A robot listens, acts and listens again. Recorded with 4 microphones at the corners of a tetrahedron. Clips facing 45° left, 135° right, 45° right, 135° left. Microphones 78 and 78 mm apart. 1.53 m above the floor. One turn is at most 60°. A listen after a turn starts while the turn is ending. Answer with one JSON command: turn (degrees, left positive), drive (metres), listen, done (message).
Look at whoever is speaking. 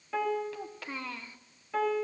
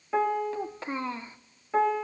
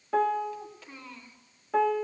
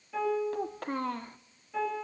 {"turn": 60}
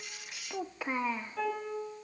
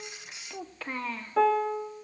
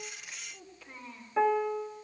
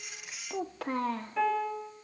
{"turn": 60}
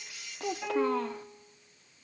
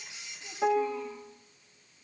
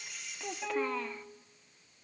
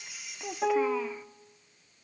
{"turn": 50}
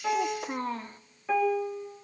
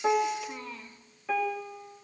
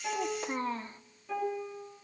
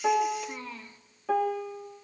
{"done": "Found it: a child speaking, straight ahead, under 1 m away."}